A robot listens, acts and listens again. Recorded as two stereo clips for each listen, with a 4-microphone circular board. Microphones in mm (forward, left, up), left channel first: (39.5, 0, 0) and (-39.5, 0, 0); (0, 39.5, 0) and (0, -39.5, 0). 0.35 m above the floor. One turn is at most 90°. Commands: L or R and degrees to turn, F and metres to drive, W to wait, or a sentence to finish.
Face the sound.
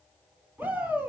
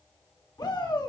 L90
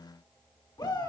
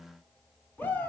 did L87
L25
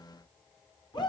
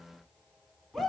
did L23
Found it: a shout, straight ahead.